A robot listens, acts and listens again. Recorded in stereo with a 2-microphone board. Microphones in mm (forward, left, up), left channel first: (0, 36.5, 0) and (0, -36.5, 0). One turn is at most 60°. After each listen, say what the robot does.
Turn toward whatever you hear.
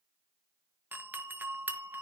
Turn 25° right.
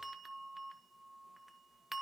Found it: a doorbell, straight ahead, 1 to 2 m away.